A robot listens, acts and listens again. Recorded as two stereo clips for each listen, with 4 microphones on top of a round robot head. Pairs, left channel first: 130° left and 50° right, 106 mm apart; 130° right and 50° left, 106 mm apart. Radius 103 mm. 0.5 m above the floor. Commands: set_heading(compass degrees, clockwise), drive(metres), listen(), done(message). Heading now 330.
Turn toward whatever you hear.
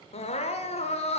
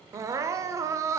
set_heading(220)
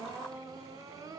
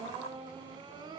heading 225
done("Found it: crying, straight ahead, under 1 m away.")